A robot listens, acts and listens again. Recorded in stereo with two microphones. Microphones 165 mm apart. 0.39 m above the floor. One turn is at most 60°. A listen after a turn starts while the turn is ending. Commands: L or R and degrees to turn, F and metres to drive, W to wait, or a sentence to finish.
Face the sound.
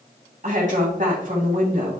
R50
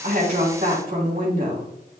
R60
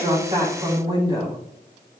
R25
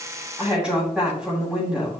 Found it: a woman speaking, straight ahead, 2 to 4 m away.